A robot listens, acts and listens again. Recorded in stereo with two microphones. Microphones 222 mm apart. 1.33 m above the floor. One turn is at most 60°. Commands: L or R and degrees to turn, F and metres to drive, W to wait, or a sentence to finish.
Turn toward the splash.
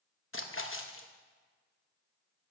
L60
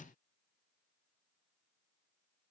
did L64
W
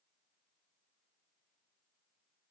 I heard a splash, but can't make it out now. It was about 5° left or 45° left.